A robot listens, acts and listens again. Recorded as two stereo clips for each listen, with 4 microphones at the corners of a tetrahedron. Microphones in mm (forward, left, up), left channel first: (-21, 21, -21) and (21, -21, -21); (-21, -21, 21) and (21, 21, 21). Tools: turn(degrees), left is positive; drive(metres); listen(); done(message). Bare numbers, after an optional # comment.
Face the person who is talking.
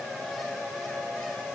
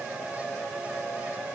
listen()
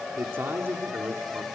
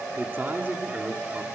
done("Facing the man speaking, 2 to 4 m away.")